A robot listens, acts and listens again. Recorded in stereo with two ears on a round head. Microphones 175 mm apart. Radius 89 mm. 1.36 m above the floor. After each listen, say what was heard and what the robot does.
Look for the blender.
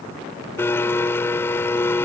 Turn 30° left.
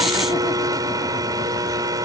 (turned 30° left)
So it is at 20° right. Turn 20° right.
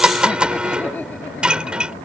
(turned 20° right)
Found it: a blender, straight ahead.